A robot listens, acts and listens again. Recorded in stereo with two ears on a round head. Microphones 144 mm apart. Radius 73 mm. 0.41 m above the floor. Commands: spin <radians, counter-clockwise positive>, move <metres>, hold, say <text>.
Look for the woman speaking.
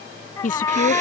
spin 1.05
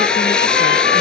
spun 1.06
hold
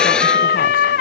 hold
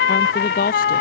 spin 1.05
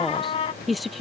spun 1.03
say Found it: a woman speaking, straight ahead.